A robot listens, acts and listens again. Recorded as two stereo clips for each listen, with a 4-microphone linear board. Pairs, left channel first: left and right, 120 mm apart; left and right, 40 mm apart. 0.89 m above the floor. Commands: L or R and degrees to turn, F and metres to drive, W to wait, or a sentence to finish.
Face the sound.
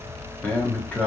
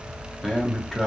L30
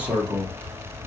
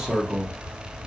R15
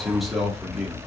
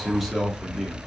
Facing the man speaking.